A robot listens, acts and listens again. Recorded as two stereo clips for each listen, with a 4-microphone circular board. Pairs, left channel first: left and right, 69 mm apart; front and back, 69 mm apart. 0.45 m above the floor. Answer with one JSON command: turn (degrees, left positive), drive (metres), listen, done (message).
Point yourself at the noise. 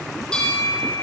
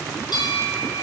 {"turn": 10}
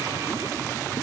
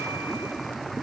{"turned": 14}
{"listen": true}
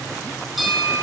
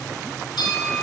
{"done": "Facing the bell, over 4 m away."}